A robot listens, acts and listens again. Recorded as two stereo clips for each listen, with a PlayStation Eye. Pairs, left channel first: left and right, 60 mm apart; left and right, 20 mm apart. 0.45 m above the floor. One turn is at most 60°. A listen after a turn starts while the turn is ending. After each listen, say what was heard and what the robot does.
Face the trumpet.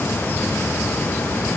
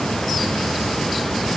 Keep listening.
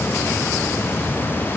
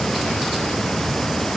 Keep listening.
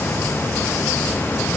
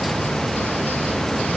I can't make out a trumpet to turn to.